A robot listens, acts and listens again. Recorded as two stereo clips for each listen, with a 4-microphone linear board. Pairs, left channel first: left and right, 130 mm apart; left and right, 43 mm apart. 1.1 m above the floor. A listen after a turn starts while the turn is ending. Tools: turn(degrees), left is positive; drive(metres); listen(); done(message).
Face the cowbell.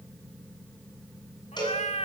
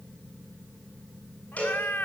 turn(degrees=30)
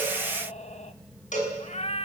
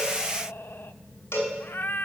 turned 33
turn(degrees=115)
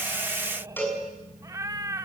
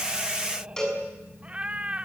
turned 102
turn(degrees=15)
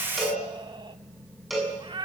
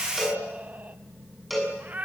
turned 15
done("Found it: a cowbell, straight ahead, over 4 m away.")